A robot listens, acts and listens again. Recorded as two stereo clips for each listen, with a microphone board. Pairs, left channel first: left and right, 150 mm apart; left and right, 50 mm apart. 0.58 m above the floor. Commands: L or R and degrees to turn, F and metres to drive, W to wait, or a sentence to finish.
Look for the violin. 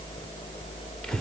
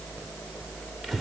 W
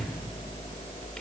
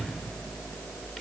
W
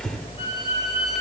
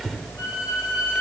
L50
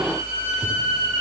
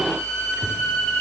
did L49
L80
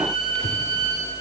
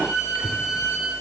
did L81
Facing the violin.